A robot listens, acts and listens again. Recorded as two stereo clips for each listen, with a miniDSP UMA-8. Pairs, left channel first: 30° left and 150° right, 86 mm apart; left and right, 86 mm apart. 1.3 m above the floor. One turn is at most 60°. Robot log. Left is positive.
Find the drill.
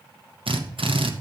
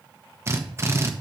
note: The drill: 150° right.
cmd yaw -60
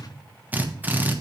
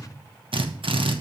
note: The drill is now 80° right.
cmd yaw -60
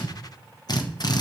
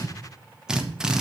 note: The drill is now 10° right.
cmd yaw -10
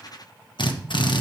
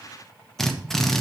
end: Facing the drill, 1 to 2 m away.